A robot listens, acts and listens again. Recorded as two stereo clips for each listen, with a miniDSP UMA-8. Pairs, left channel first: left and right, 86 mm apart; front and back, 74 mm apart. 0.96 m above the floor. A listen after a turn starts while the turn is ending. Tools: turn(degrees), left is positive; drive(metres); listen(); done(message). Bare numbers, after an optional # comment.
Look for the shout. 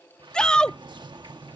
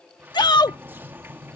# The shout: 10° left.
turn(10)
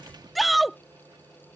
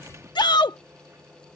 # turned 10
done("Facing the shout.")